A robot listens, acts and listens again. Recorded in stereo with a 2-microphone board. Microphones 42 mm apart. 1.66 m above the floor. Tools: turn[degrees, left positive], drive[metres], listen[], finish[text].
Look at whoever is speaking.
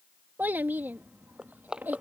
Thought: The child speaking: about 50° right or 130° right.
Action: turn[-50]
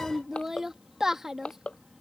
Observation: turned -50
Thought: So it is at 10° right.
Action: turn[-10]
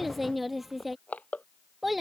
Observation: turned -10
Action: finish[Facing the child speaking.]